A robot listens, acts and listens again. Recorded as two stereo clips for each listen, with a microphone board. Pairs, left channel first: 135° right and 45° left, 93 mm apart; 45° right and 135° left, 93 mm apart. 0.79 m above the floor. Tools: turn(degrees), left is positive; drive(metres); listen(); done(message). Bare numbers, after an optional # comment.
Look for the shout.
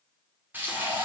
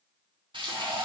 listen()
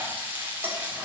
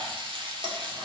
listen()
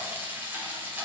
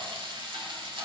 done("I can't make out a shout to turn to.")